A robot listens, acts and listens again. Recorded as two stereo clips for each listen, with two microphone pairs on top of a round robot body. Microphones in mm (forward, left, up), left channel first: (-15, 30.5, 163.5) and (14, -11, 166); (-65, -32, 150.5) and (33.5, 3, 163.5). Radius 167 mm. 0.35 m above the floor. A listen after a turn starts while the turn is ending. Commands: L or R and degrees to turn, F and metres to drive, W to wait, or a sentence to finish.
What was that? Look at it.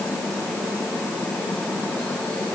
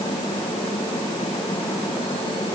W
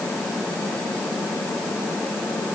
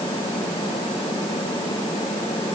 W
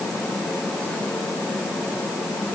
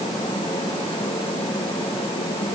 I can't make out anything.